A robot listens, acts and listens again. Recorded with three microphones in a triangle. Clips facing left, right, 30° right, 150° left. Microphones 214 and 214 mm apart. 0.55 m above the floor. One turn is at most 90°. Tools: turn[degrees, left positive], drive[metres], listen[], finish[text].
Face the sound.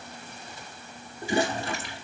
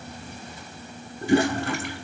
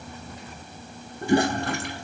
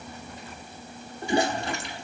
Thought: The toilet flushing: 60° right.
Action: turn[-60]
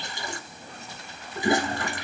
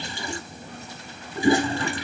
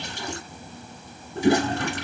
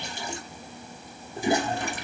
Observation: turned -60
Thought: The toilet flushing is now 25° right.
Action: turn[-25]
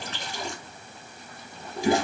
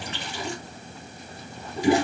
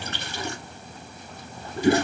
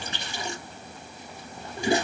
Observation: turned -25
Action: finish[Facing the toilet flushing.]